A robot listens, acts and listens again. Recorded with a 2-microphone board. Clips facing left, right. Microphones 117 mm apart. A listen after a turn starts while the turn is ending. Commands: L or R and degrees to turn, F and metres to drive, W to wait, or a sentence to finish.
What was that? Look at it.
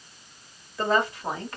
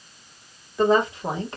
R20
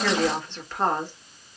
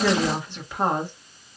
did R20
R30
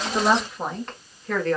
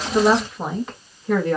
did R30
R30
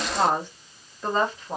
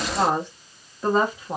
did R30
R30
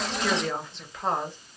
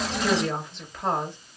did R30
Facing the woman speaking.